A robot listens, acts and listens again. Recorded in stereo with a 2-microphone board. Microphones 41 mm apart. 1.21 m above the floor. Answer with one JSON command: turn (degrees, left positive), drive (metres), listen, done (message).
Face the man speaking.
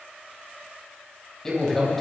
{"turn": 30}
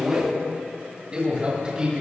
{"turn": -25}
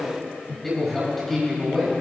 {"done": "Facing the man speaking, over 4 m away."}